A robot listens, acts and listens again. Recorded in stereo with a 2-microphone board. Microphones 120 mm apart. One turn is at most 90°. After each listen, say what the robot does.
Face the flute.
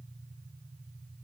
Keep listening.
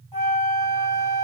Turn 30° left.
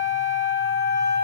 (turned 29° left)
Turn 90° left.
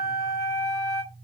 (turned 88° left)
Turn 30° left.
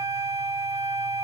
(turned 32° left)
Found it: a flute, straight ahead.